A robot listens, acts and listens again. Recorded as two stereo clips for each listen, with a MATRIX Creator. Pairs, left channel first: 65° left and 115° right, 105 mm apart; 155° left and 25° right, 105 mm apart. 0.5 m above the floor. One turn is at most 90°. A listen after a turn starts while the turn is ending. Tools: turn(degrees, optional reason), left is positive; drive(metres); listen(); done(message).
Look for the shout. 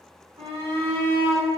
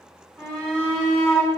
turn(degrees=-90, reason="The shout: 115° right.")
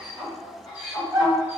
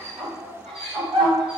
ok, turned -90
turn(degrees=-30, reason="The shout is now 30° right.")
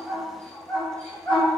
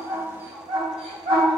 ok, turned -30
done("Found it: a shout, straight ahead.")